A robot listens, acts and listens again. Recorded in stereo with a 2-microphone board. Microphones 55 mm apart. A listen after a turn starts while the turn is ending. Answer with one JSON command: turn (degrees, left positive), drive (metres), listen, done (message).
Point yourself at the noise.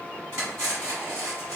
{"turn": -70}
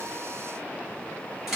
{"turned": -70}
{"turn": -10}
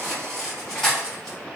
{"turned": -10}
{"done": "Found it: cutlery clinking, straight ahead, 1 to 2 m away."}